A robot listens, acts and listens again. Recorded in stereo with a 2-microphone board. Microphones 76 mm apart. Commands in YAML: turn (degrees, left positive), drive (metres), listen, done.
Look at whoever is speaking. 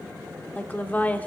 turn: 20
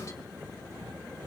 listen: true
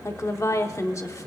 turn: 140
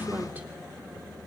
listen: true
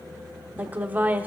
turn: -20
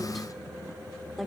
listen: true
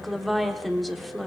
done: "Facing the woman speaking, 1 to 2 m away."